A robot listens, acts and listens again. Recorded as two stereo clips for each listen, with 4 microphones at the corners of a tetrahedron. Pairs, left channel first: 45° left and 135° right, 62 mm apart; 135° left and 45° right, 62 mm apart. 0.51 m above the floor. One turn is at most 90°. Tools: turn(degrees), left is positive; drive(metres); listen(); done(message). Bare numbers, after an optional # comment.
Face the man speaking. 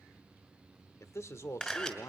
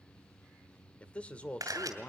# The man speaking: 70° left.
turn(70)
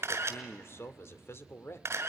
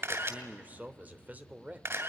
# The man speaking is now 10° left.
turn(10)
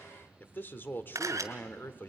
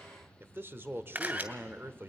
done("Facing the man speaking, 1 to 2 m away.")